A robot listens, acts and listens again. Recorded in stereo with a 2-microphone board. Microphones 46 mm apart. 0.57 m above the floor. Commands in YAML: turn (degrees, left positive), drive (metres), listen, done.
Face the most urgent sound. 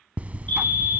turn: 35
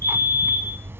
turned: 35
turn: 110
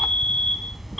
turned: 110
done: "Found it: a fire alarm, straight ahead."